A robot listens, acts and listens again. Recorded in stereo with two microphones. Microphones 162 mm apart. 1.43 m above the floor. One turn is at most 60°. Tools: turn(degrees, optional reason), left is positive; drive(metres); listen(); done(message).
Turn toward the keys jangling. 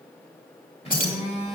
turn(degrees=60, reason="The keys jangling: about 60° left or 120° left.")
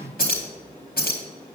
turn(degrees=60, reason="So it is at 65° left.")
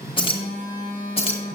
turn(degrees=35, reason="The keys jangling is now 35° left.")
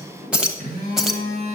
done("Found it: keys jangling, straight ahead, 1 to 2 m away.")